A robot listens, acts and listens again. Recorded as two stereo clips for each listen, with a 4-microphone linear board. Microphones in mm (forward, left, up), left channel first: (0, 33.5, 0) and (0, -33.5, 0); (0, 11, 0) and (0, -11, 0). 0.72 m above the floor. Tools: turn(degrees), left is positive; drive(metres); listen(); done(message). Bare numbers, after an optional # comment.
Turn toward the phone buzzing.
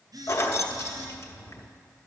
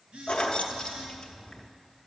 # The phone buzzing: about 65° right or 115° right.
turn(-65)
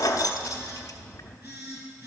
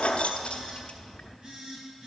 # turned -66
# So it is at 45° right.
turn(-45)
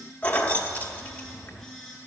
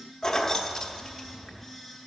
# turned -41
done("Found it: a phone buzzing, straight ahead, 2 to 4 m away.")